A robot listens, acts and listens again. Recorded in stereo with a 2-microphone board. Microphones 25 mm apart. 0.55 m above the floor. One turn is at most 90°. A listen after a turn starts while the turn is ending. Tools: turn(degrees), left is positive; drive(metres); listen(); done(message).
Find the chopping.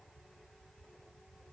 listen()
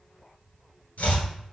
turn(degrees=90)
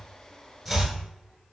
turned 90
done("Facing the chopping.")